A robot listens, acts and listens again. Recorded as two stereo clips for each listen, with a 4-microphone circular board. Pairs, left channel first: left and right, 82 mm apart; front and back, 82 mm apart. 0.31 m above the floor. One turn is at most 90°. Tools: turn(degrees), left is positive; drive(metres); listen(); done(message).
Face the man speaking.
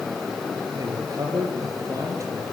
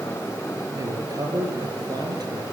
turn(degrees=-90)
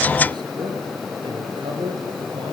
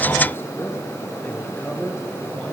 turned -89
turn(degrees=-75)
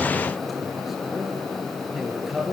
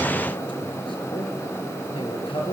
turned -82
done("Facing the man speaking.")